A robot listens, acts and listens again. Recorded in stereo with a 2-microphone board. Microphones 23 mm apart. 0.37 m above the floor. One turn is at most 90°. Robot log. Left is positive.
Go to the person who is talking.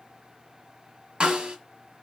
cmd idle
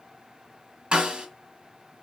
cmd idle
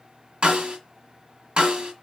end: I can't make out anyone speaking to turn to.